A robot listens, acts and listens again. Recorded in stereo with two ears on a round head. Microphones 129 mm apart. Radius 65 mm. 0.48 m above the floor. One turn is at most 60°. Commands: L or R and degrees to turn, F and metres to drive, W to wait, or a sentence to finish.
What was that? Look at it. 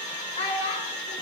L45
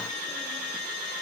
W
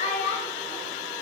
L55
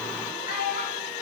L60
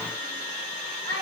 L30
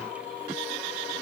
W
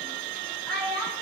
Found it: a child speaking, straight ahead, 2 to 4 m away.